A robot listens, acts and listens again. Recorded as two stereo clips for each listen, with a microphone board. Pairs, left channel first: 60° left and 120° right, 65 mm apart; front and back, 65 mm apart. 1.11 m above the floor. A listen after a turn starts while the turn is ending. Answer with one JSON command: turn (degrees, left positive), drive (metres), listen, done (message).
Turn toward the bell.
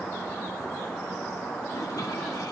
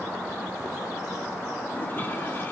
{"listen": true}
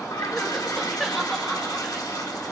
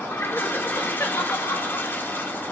{"listen": true}
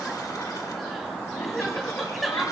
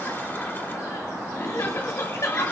{"done": "I can't make out a bell, only crying and a toilet flushing."}